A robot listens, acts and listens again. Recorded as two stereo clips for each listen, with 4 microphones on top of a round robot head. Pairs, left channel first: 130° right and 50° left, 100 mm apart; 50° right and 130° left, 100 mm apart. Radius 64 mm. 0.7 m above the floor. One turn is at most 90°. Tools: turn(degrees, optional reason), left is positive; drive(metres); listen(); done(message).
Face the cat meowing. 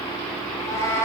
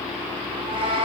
turn(degrees=90, reason="The cat meowing: 165° left.")
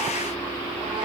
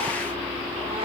turn(degrees=75, reason="Nothing new. It was at 75° left.")
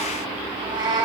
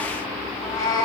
done("Facing the cat meowing.")